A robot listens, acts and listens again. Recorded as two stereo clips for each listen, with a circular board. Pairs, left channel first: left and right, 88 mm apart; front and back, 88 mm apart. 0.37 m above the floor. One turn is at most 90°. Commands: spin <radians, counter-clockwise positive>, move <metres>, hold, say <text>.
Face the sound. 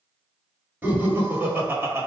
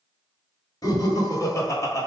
spin -0.70
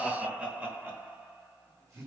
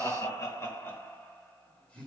spin -1.22
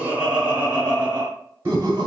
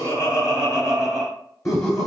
spin -0.87
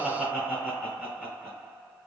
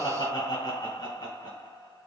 say Found it: laughter, straight ahead, 1 to 2 m away.